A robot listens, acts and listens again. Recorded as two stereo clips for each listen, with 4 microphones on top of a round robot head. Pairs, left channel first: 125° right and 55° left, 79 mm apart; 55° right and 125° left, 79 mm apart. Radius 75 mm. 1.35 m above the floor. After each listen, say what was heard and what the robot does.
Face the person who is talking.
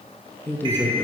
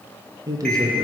The man speaking: 170° left. Turn 170° left.
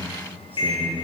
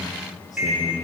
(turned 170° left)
The man speaking is now 15° right. Turn 15° right.
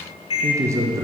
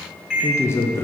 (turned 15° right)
Facing the man speaking.